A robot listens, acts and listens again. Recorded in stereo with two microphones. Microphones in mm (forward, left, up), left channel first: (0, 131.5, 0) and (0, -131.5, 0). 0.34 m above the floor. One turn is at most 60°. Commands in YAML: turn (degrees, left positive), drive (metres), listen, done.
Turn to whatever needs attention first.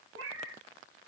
listen: true
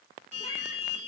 turn: -30
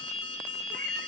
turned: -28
done: "Facing the alarm, 1 to 2 m away."